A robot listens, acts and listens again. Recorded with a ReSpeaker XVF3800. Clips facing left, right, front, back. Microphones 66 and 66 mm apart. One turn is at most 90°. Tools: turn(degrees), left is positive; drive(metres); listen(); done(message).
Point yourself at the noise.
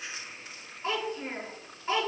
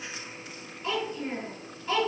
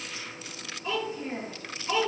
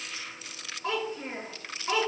turn(degrees=90)
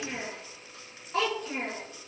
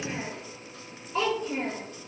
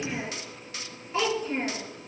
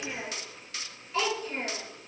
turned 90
turn(degrees=70)
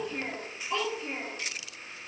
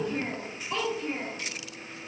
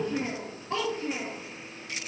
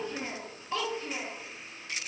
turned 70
done("Found it: a child speaking, straight ahead, over 4 m away.")